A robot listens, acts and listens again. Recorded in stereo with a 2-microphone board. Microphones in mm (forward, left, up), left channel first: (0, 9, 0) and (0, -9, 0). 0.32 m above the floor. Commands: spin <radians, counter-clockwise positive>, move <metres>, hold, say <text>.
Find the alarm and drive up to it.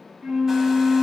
hold
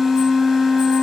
hold
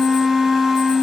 say I can't make out an alarm, only a flute.